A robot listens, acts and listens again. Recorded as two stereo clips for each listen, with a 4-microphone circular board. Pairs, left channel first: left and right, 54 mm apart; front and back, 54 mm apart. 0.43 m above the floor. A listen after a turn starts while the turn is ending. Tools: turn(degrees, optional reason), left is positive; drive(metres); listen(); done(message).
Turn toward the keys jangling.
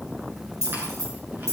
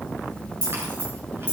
turn(degrees=-70, reason="The keys jangling: 70° right.")
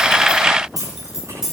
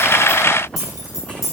turn(degrees=-10, reason="The keys jangling is now 10° right.")
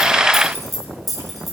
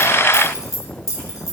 done("Facing the keys jangling, over 4 m away.")